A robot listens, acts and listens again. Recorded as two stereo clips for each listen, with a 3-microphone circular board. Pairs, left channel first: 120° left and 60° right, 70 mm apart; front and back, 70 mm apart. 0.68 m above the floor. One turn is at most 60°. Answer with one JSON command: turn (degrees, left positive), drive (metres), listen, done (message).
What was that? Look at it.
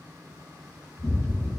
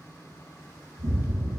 {"turn": 60}
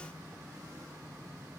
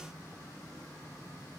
{"turn": 60}
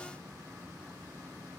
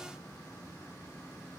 {"turn": 40}
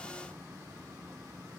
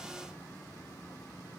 {"done": "Facing where the explosion came from. I can't hear it now."}